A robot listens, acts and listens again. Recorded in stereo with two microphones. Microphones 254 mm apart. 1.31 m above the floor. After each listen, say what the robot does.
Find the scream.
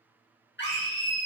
Turn 45° left.
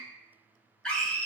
Facing the scream, under 1 m away.